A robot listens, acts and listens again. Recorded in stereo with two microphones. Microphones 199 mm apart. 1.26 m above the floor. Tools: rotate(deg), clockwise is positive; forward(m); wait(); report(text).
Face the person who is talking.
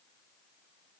wait()
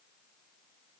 wait()
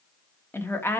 rotate(-30)
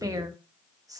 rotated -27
rotate(15)
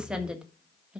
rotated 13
report("Found it: a woman speaking, straight ahead, 1 to 2 m away.")